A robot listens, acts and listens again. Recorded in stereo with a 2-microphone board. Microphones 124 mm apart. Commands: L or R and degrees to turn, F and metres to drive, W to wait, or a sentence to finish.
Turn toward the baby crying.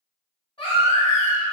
L45
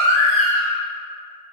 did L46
Found it: a baby crying, straight ahead, 1 to 2 m away.